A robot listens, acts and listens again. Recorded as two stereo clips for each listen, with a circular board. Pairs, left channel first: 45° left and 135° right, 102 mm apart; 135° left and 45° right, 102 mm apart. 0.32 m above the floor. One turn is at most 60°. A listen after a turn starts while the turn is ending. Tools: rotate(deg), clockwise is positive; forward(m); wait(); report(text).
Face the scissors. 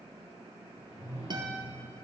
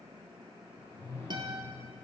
wait()
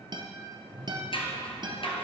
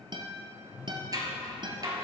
rotate(-10)
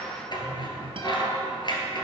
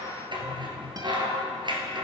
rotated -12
report("Facing the scissors.")